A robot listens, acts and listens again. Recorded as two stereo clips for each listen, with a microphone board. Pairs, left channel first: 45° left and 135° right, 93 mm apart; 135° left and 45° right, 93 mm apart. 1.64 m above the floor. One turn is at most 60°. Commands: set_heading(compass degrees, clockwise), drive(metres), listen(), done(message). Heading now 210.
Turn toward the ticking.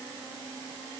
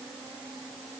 listen()
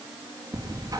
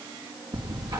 set_heading(270)
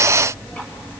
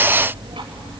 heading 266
set_heading(296)
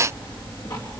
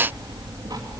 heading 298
done("Facing the ticking, 2 to 4 m away.")